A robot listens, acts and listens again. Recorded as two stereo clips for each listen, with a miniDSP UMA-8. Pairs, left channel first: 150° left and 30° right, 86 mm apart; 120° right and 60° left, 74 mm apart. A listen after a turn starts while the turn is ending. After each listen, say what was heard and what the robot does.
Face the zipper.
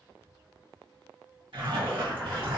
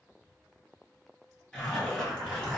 The zipper: 40° right. Turn 40° right.
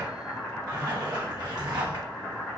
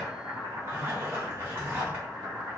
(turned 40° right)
Found it: a zipper, straight ahead.